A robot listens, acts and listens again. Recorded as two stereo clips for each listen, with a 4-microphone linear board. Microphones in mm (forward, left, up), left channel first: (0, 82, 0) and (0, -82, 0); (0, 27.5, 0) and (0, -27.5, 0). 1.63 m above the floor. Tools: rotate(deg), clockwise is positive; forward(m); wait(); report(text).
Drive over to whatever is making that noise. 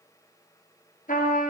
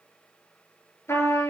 rotate(-55)
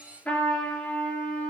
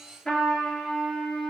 rotate(-10)
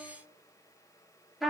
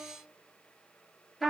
forward(1.0)
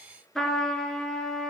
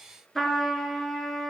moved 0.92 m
forward(1.0)
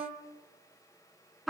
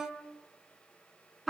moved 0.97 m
forward(1.0)
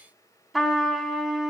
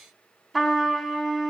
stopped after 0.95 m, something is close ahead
report("Arrived at the trumpet, straight ahead.")